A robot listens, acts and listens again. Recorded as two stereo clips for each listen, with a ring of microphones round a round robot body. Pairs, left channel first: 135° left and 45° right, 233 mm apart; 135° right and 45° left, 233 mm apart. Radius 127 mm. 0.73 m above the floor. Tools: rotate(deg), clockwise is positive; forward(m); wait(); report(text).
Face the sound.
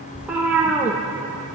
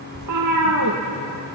rotate(-40)
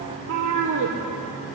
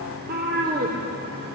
rotate(10)
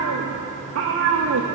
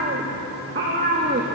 report("Found it: a cat meowing, straight ahead.")